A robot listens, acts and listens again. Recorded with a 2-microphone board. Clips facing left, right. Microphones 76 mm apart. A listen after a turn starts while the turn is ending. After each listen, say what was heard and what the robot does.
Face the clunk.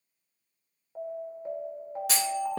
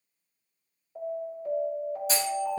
The clunk: about 65° left or 115° left. Turn 65° left.
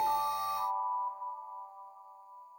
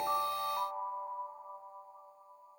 Keep listening.
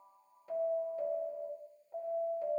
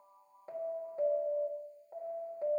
I heard a clunk, but can't make it out now. It was about straight ahead or 50° left.